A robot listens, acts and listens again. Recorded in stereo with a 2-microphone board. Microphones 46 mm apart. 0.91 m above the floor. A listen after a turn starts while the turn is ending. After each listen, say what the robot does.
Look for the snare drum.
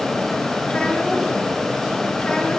Keep listening.
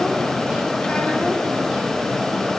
Keep listening.
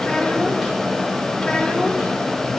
I can't make out a snare drum to turn to.